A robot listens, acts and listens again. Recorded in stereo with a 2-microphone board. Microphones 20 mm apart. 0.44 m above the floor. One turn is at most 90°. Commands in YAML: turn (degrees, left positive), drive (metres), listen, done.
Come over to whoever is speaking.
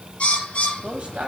turn: -55
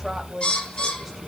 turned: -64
drive: 1.0
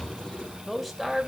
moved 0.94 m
turn: 10
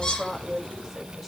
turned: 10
drive: 1.0
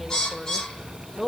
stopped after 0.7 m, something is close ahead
done: "Arrived at the woman speaking, straight ahead."